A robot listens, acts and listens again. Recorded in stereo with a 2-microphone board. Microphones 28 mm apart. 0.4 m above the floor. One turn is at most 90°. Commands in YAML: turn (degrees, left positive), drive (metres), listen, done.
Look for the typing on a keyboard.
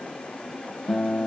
listen: true
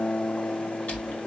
turn: 65
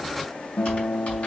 turn: 45
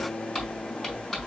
done: "Found it: typing on a keyboard, straight ahead, over 4 m away."